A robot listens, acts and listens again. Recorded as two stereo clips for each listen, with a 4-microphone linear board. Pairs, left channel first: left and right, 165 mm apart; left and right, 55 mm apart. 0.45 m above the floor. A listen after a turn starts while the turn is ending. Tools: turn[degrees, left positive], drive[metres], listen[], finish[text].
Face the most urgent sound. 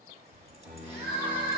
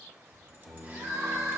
Action: turn[-90]
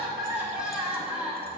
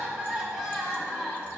Action: finish[Found it: crying, straight ahead, 1 to 2 m away.]